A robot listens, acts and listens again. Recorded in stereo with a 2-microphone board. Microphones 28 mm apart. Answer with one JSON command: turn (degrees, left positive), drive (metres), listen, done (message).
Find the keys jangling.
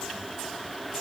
{"listen": true}
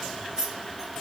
{"turn": -25}
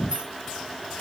{"turn": -40}
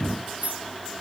{"turn": -115}
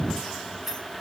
{"turn": -15}
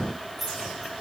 {"done": "Facing the keys jangling."}